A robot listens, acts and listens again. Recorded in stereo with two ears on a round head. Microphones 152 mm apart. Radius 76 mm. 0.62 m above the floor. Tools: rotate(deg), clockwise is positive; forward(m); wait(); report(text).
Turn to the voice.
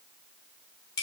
wait()
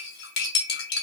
wait()
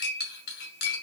report("I can't make out anyone speaking, only cutlery clinking.")